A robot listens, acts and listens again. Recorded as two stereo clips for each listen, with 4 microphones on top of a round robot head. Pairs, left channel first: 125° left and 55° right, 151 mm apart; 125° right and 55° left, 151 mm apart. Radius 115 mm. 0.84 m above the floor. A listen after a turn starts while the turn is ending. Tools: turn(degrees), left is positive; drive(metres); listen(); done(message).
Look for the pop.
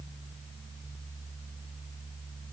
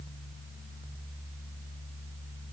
listen()
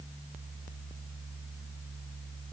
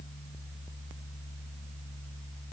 listen()
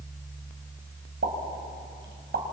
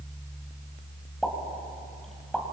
turn(degrees=-35)
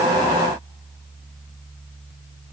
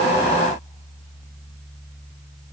done("I heard a pop from this way, but can't make it out now.")